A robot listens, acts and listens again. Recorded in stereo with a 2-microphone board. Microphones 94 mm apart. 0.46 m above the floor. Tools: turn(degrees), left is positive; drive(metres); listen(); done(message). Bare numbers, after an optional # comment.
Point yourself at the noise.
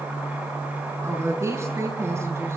# The woman speaking: about 30° right or 150° right.
turn(-30)
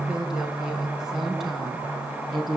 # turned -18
done("Found it: a woman speaking, straight ahead, over 4 m away.")